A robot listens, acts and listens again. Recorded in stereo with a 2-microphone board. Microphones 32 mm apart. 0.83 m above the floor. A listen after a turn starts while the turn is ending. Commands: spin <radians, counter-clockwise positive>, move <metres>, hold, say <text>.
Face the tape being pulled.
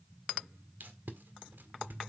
spin -1.57
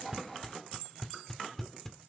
spin 0.26
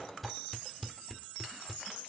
say Found it: tape being pulled, straight ahead.